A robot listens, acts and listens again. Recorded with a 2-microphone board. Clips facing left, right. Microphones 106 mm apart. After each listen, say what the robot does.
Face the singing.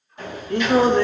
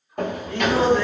Turn 50° left.
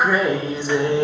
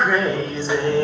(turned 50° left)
Turn 20° left.
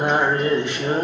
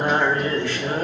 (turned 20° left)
Turn 25° left.
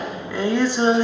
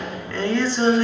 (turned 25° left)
Turn 20° left.
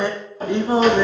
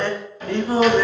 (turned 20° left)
Turn 25° left.
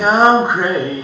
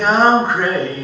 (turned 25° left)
Turn 20° left.
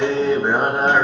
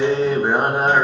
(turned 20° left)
Facing the singing, 1 to 2 m away.